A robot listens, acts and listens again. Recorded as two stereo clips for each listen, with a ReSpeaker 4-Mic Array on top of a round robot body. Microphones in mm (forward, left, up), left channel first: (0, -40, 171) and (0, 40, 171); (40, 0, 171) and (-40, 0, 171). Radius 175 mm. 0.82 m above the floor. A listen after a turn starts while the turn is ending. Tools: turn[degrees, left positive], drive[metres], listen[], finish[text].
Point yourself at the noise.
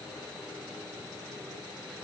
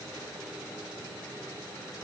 Action: listen[]
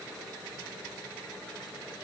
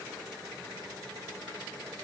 Action: listen[]
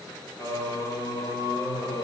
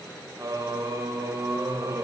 Thought: The singing: 125° right.
Action: turn[-125]
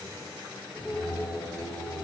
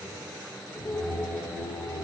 Thought: The singing is now 15° left.
Action: turn[15]
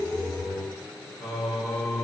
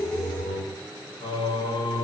Action: finish[Facing the singing, over 4 m away.]